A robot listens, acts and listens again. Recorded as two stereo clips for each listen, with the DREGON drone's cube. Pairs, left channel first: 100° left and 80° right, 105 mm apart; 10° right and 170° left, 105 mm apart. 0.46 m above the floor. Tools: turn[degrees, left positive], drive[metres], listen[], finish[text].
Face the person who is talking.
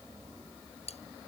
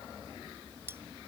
Action: listen[]
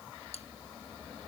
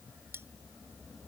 Action: listen[]
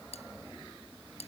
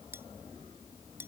Action: finish[I can't make out anyone speaking, only cutlery clinking.]